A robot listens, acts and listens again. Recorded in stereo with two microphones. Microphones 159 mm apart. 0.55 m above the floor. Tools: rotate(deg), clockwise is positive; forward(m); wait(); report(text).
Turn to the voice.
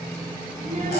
rotate(60)
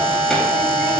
wait()
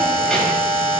wait()
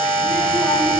report("I heard a child speaking, but can't make it out now. It was about straight ahead or 60° right.")